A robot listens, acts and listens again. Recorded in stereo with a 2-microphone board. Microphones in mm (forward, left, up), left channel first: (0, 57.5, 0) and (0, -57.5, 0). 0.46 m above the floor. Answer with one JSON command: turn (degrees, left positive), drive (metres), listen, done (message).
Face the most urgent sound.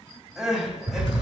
{"turn": -30}
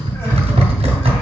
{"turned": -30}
{"listen": true}
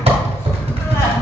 {"listen": true}
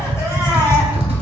{"done": "I heard crying, but can't make it out now. It was about 25° left or 145° right."}